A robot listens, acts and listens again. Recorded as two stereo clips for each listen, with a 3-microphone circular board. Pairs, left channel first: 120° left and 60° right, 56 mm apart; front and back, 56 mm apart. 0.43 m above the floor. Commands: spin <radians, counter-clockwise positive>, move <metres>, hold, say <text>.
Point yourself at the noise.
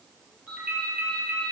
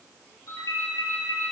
say Found it: a ringtone, straight ahead.